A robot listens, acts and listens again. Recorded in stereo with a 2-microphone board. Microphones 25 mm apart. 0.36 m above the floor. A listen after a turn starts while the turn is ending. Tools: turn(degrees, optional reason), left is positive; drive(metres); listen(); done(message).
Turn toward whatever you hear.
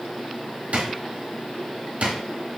turn(degrees=-65, reason="The drawer: about 65° right or 115° right.")
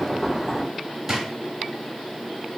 turn(degrees=-25, reason="So it is at 25° right.")
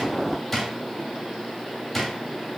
turn(degrees=10, reason="The drawer is now 10° left.")
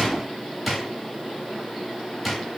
done("Found it: a drawer, straight ahead, under 1 m away.")